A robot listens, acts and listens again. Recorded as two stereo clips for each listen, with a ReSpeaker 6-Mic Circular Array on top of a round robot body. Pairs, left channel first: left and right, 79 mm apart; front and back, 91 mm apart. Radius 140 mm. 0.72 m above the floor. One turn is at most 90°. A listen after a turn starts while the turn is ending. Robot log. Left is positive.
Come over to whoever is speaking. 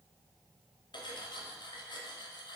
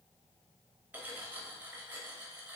cmd idle
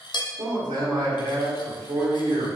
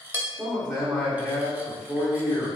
note: The man speaking: 100° right.
cmd yaw -90
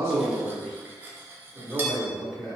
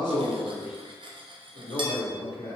cmd fwd 1.0
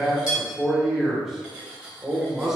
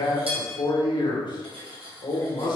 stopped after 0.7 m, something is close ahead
end: Arrived at the man speaking, straight ahead.